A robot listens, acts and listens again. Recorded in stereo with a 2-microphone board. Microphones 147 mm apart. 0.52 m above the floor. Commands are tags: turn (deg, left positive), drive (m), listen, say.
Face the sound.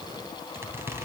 <turn deg="-15"/>
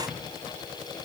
<listen/>
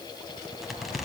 <say>Found it: a squeak, straight ahead, 2 to 4 m away.</say>